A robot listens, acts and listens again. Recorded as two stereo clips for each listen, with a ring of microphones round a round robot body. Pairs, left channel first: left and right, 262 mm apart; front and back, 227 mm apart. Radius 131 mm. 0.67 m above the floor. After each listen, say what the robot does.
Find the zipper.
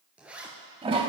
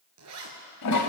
Turn 175° right.
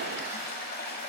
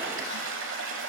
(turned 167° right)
Turn 10° right.
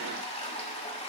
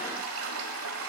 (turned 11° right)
Keep listening.
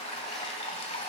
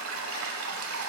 I heard a zipper from this way, but can't make it out now.